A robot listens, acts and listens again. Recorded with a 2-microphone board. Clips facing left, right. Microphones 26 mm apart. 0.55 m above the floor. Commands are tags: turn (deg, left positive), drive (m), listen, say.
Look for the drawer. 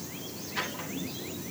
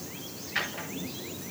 <turn deg="-45"/>
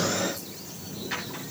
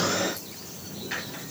<say>Found it: a drawer, straight ahead, over 4 m away.</say>